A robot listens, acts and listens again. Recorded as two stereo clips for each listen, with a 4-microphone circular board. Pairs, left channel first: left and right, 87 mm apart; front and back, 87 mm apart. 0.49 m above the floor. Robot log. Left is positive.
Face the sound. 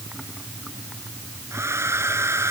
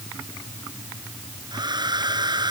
note: The hair dryer: 150° right.
cmd yaw -150
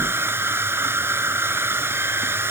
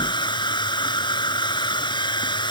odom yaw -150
note: The hair dryer is now 25° right.
cmd yaw -25
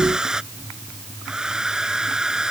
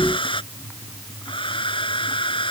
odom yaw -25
end: Found it: a hair dryer, straight ahead.